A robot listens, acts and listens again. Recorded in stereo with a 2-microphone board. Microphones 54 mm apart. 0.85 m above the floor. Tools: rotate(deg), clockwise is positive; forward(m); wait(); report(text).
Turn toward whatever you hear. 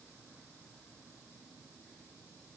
wait()
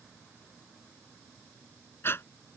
rotate(-45)
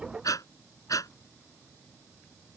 rotate(-90)
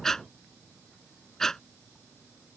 report("Found it: breathing, straight ahead.")